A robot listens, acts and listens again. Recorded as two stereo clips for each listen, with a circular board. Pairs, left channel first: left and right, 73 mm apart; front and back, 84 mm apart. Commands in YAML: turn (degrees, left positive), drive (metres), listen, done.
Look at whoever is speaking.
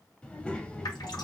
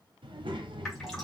turn: 165
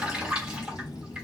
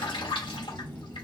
turn: 65
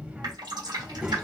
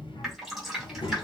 turn: -15
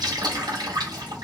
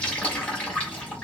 listen: true
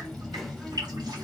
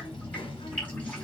done: "Facing the child speaking."